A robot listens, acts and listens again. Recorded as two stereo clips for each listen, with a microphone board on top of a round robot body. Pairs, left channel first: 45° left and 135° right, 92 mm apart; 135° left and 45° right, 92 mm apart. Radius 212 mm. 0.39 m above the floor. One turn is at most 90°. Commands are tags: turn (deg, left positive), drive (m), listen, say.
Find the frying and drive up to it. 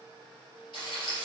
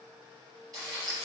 <drive m="1.0"/>
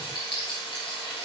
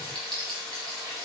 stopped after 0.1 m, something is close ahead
<say>Blocked. The frying is further on, straight ahead.</say>